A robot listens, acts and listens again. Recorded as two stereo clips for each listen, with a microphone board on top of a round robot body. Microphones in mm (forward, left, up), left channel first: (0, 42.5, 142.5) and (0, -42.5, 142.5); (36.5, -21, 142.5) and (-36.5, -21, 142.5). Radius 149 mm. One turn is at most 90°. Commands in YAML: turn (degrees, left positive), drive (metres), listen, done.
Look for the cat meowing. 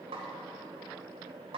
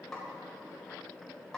listen: true
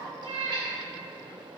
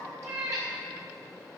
turn: -90
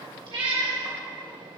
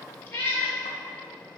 turn: -60
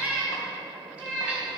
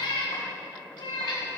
turn: -10
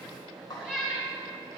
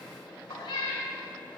done: "Facing the cat meowing, 2 to 4 m away."